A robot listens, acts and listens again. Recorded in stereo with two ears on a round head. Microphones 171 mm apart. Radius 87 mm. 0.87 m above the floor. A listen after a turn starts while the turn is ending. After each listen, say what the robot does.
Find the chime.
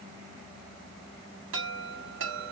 Turn 70° right.
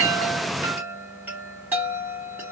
Turn 10° right.
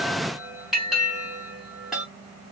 Facing the chime.